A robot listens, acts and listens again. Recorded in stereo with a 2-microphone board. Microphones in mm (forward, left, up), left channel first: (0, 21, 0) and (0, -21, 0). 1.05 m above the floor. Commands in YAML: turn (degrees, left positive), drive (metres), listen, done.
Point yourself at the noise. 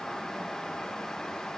listen: true
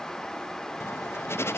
turn: 90
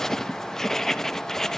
turn: 10
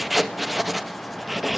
done: "Facing the writing, 1 to 2 m away."